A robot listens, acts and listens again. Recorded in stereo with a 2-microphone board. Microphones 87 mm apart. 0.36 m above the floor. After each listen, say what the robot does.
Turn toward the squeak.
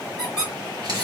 Turn 30° right.
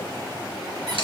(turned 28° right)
Keep listening.
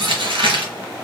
Keep listening.
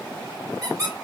Turn 140° right.
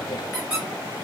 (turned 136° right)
Found it: a squeak, straight ahead.